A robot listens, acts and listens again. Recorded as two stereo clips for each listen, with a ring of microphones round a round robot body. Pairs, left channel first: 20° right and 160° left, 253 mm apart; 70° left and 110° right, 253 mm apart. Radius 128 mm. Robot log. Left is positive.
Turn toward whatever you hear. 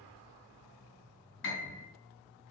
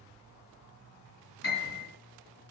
note: The piano: 20° left.
cmd yaw +20
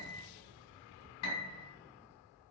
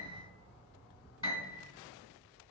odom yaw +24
end: Facing the piano, 2 to 4 m away.